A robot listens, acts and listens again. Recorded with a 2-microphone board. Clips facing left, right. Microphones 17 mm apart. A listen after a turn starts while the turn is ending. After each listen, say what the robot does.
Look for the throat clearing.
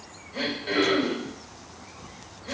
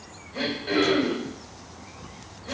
Turn 30° left.
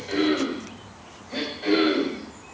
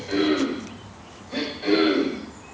Turn 15° right.
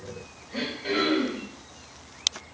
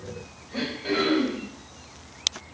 Found it: throat clearing, straight ahead, 1 to 2 m away.